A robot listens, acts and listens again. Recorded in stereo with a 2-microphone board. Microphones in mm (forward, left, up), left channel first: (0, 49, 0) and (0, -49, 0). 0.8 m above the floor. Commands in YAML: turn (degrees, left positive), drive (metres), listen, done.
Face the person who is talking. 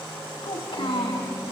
turn: 65
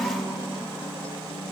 listen: true
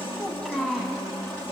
done: "Found it: a child speaking, straight ahead."